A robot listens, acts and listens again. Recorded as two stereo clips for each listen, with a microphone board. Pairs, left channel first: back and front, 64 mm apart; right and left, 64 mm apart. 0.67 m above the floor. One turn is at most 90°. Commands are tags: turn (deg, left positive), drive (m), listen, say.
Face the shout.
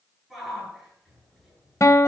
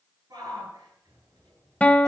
<turn deg="90"/>
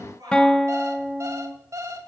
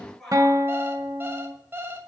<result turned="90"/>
<say>Facing the shout.</say>